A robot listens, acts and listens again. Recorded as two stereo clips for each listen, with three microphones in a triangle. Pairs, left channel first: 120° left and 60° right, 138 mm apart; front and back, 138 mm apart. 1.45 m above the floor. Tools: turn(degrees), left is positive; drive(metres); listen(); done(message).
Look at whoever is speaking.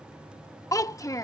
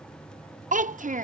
turn(degrees=-175)
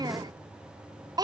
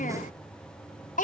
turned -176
done("Found it: a child speaking, straight ahead.")